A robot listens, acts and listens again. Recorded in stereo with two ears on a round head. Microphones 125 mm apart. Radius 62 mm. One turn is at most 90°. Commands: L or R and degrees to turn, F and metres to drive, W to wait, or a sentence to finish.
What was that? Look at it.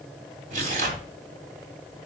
R55
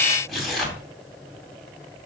Facing the tearing paper.